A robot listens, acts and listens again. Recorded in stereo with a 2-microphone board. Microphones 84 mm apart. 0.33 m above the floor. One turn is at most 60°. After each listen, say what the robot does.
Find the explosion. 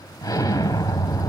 Turn 45° left.
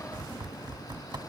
Keep listening.
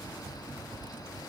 I heard an explosion, but can't make it out now. It was about straight ahead or 90° left.